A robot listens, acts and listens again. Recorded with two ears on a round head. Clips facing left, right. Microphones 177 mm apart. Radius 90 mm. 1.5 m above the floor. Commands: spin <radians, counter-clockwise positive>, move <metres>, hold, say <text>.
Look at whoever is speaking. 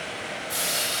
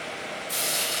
hold
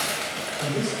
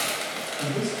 spin -0.52
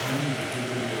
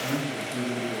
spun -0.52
spin -2.71
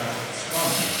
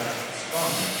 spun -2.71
hold
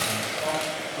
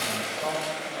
hold
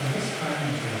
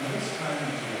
spin 0.26
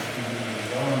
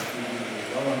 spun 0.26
say Found it: a man speaking, straight ahead.